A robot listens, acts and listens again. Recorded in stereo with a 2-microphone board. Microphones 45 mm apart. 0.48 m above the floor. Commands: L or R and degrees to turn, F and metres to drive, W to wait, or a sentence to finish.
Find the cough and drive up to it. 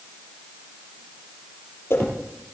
W
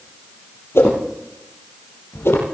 W
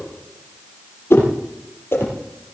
I can't make out a cough, only a whoosh.